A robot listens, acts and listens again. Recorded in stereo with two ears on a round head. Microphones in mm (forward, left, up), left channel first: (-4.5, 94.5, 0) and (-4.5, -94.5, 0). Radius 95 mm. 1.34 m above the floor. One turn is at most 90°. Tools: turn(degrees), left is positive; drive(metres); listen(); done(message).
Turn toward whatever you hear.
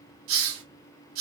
turn(degrees=-70)
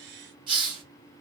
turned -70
turn(degrees=-25)
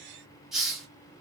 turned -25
done("Facing the hiss, 1 to 2 m away.")